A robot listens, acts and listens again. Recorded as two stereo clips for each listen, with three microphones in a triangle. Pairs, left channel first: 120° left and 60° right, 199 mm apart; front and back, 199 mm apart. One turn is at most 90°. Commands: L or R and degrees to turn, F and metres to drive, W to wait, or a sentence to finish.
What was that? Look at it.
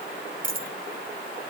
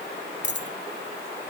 R20
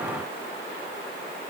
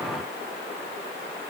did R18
Facing where the dropped coin came from. I can't hear it now.